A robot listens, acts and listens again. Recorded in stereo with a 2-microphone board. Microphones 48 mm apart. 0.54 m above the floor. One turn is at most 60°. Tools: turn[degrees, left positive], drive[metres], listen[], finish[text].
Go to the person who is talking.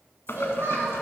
Thought: The child speaking: about 65° right or 115° right.
Action: turn[-60]
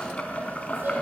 Action: listen[]
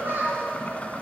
Thought: So it is at 55° right.
Action: turn[-55]
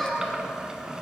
Action: drive[1.0]
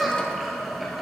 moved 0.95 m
Thought: The child speaking is now 10° right.
Action: turn[-10]
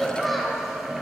Action: drive[1.0]
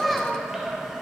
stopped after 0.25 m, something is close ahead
Action: finish[I am next to the child speaking.]